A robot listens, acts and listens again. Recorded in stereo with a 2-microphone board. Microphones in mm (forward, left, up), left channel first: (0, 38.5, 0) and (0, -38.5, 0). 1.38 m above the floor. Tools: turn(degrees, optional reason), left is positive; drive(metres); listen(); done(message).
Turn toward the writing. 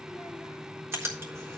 turn(degrees=-35, reason="The writing: about 35° right or 145° right.")
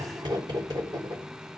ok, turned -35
turn(degrees=-110, reason="So it is at 110° right.")
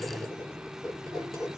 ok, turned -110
done("Facing the writing.")